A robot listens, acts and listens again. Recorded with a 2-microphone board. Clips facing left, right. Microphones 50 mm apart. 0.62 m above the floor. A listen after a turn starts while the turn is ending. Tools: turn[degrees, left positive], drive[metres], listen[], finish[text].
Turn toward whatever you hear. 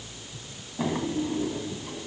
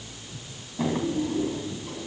Action: turn[30]
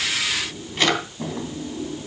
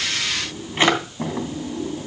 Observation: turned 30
Thought: So it is at 25° right.
Action: turn[-25]
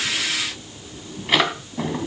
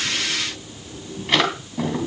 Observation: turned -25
Action: finish[Facing the drawer.]